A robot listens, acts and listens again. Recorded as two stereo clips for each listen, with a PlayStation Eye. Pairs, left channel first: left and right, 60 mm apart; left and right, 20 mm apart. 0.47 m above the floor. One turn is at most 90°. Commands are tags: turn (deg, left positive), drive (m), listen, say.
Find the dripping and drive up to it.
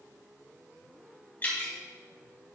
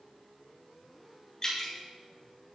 <turn deg="30"/>
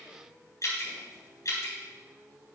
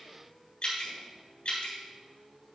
<turn deg="90"/>
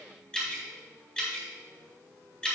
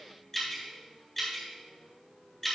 <turn deg="15"/>
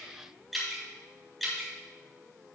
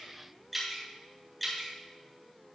<drive m="1.0"/>
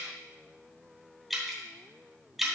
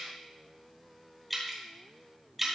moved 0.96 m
<drive m="1.0"/>
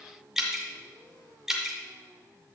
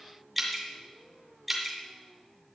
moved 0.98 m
<turn deg="-10"/>
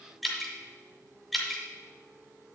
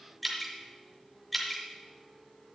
<drive m="1.0"/>
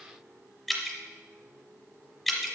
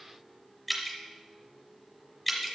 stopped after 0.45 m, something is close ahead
<say>Arrived at the dripping, straight ahead.</say>